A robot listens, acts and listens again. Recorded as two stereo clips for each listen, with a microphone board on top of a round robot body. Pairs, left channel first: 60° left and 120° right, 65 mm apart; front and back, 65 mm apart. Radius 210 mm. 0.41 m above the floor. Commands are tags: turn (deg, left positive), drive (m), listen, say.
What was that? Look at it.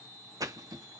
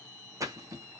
<turn deg="-145"/>
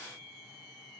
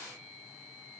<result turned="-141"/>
<say>I heard a splash from this way, but can't make it out now.</say>